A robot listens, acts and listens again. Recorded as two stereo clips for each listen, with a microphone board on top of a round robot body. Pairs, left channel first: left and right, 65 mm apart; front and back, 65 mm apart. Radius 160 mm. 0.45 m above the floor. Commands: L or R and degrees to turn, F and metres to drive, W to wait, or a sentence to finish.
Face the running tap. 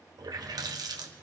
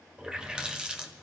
R105
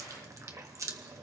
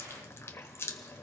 R50
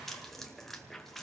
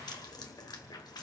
Facing the running tap, 1 to 2 m away.